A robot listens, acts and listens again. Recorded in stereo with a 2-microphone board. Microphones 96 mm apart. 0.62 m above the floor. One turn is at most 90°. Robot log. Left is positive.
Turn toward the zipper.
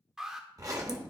note: The zipper: about 35° right or 145° right.
cmd yaw -35
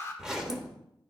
end: Facing the zipper.